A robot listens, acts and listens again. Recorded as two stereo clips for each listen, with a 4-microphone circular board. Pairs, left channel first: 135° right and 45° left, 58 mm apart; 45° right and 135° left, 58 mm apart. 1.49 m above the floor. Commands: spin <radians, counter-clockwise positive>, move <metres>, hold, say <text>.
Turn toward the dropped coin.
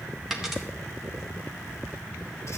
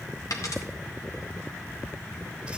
spin -0.61
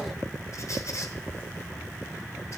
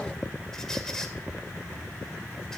say Facing where the dropped coin came from. I can't hear it now.